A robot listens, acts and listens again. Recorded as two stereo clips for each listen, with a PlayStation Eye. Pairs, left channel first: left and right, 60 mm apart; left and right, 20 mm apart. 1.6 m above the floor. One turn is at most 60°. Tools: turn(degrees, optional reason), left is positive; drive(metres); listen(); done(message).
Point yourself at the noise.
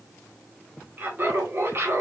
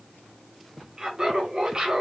turn(degrees=-45, reason="The laughter: about 45° right or 135° right.")
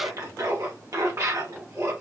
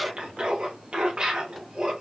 turn(degrees=-60, reason="So it is at 70° right.")
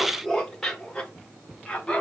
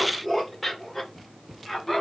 turn(degrees=10, reason="The laughter is now 10° left.")
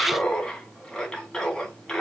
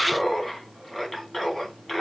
done("Facing the laughter, 2 to 4 m away.")